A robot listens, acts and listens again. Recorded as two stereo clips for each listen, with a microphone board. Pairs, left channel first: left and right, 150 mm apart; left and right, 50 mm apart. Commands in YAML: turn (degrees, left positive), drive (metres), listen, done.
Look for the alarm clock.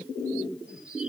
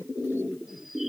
listen: true
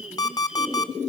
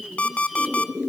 turn: 25
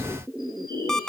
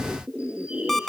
done: "Facing the alarm clock, 1 to 2 m away."